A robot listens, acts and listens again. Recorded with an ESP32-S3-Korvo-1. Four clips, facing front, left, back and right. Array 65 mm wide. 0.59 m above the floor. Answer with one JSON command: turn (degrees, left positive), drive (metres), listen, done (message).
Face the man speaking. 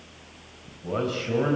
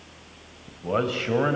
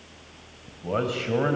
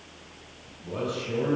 {"turn": 115}
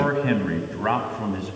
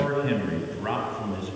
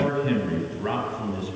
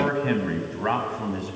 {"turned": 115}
{"turn": -30}
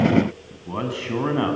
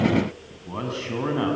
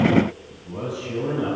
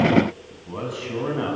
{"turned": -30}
{"done": "Found it: a man speaking, straight ahead, over 4 m away."}